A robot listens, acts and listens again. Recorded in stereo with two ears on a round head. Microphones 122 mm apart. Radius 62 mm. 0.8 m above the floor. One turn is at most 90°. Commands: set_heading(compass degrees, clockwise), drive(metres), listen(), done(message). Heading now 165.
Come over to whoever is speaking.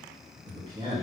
set_heading(195)
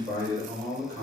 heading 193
set_heading(283)
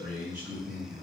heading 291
set_heading(311)
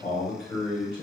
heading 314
drive(1.0)
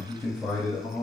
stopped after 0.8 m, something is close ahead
set_heading(304)
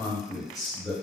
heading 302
done("I am next to the man speaking.")